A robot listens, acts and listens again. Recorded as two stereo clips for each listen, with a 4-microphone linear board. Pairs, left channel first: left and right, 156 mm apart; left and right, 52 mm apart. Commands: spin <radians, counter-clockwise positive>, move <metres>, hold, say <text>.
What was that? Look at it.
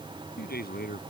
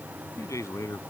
spin 1.57
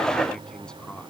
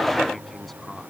say Facing the man speaking.